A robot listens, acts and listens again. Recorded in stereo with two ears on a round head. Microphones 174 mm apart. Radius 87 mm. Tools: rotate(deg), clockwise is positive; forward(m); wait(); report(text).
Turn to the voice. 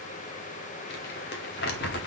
wait()
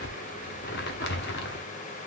wait()
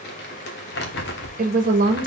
rotate(45)
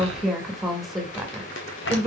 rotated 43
report("Found it: a woman speaking, straight ahead, 1 to 2 m away.")